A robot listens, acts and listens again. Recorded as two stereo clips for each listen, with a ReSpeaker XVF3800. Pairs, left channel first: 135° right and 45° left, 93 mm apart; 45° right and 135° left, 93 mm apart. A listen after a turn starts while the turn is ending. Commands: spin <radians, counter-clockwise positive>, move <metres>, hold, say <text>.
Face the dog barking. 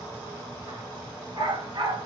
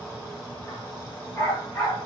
say Facing the dog barking.